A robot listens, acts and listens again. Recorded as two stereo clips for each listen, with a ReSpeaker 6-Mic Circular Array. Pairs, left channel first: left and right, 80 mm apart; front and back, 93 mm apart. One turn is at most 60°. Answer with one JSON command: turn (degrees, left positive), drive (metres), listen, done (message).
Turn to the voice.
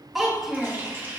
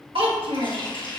{"turn": 60}
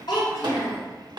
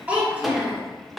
{"turn": 60}
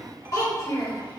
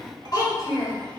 {"turn": 45}
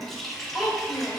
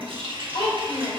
{"done": "Facing the child speaking, over 4 m away."}